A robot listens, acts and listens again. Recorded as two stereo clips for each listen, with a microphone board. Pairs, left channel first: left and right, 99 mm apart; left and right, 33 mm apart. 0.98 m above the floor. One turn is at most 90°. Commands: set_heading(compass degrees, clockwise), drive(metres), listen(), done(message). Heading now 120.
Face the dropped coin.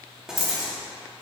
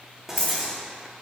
set_heading(65)
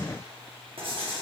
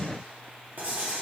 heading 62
listen()
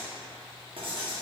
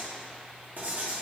done("I heard a dropped coin, but can't make it out now. It was about 5° right or 65° left.")